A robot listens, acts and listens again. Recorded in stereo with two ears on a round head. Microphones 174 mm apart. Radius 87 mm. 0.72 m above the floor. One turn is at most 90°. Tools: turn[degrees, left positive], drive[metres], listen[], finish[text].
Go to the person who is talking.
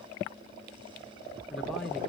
Action: turn[30]
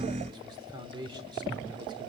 Thought: So it is at 25° right.
Action: turn[-25]
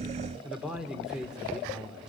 Action: drive[1.0]
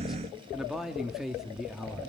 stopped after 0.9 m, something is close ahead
Action: finish[Arrived at the man speaking, straight ahead.]